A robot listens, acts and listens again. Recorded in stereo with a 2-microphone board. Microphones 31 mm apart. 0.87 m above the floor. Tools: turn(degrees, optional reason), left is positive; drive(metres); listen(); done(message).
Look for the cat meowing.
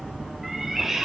turn(degrees=-30)
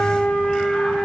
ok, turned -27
listen()
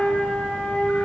listen()
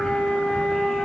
done("I heard a cat meowing, but can't make it out now. It was about 20° left or 145° right.")